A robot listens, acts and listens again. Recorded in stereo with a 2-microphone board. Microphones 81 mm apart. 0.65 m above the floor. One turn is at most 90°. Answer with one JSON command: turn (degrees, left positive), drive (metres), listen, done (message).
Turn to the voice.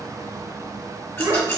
{"turn": -90}
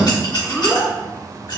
{"done": "Found it: a child speaking, straight ahead, 1 to 2 m away."}